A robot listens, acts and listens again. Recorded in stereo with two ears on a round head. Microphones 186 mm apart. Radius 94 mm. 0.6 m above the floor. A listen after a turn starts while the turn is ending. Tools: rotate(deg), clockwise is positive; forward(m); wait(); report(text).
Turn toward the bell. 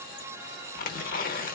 wait()
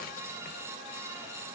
wait()
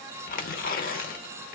report("I can't make out a bell to turn to.")